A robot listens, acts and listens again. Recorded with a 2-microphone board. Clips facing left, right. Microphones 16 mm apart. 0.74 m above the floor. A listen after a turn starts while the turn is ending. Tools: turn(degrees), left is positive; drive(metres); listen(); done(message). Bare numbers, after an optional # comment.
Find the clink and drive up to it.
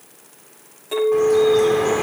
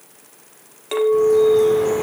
# The clink: about 45° right or 135° right.
turn(-45)
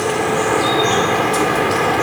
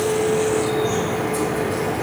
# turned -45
listen()
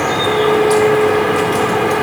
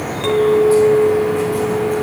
# So it is at 95° right.
turn(-95)
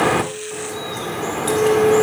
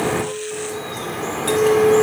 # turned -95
drive(1.0)
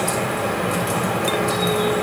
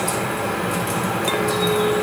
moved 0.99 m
listen()
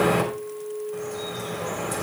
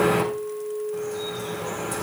drive(1.0)
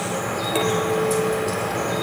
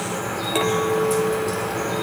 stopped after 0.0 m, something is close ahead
done("I am next to the clink.")